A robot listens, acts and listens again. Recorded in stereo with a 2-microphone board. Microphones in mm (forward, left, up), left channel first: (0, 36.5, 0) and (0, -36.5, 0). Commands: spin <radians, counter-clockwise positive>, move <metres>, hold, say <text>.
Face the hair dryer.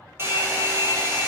spin -0.61
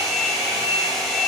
say Facing the hair dryer.